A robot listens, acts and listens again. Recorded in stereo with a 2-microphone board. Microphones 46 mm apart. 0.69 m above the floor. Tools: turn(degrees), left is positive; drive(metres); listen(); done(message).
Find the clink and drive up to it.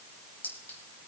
turn(degrees=40)
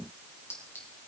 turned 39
turn(degrees=100)
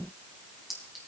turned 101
drive(metres=1.0)
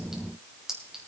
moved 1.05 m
turn(degrees=-10)
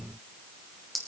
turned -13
drive(metres=1.0)
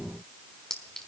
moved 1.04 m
turn(degrees=15)
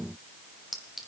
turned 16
drive(metres=1.0)
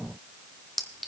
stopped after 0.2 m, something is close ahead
done("Arrived at the clink, straight ahead.")